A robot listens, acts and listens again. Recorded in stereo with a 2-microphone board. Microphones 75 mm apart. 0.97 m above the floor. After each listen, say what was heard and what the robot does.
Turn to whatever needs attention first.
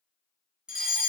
Turn 30° right.
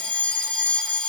So it is at 20° left. Turn 20° left.
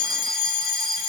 Facing the fire alarm, 2 to 4 m away.